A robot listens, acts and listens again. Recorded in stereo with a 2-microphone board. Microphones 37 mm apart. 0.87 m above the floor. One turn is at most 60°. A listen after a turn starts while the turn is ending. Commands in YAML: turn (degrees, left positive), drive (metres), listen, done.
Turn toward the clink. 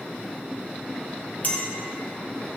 turn: 45
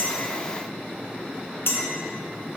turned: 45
turn: 60
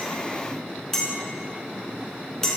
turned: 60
turn: 10
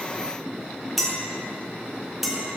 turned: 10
done: "Found it: a clink, straight ahead, 1 to 2 m away."